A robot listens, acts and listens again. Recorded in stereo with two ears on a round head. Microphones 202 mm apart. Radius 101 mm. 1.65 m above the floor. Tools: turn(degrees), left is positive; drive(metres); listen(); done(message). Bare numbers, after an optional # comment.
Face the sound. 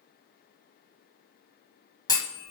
# The clunk: about 15° left or 165° left.
turn(15)
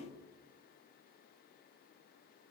listen()
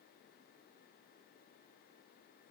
done("I heard a clunk, but can't make it out now. It was about straight ahead or 150° left.")